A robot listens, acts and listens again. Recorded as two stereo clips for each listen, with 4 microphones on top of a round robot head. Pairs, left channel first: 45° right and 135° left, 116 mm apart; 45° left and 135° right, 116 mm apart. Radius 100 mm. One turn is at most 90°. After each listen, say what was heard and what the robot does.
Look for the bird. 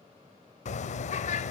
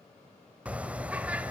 The bird: 60° right. Turn 60° right.
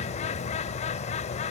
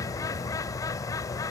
The bird is now 20° right. Turn 20° right.
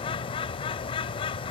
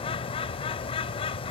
Facing the bird.